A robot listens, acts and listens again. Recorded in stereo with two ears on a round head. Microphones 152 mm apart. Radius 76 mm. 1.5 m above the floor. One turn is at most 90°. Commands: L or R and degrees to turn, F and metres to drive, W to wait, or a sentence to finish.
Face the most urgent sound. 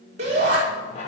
R40
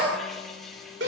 R90
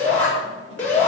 L10
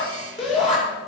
Facing the shout, over 4 m away.